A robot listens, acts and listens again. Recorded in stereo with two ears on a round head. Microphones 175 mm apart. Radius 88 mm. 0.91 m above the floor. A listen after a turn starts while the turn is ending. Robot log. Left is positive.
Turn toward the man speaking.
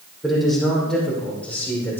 cmd yaw +30
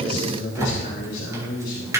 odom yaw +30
note: So it is at 125° left.
cmd yaw +125
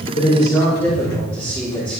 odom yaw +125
end: Facing the man speaking.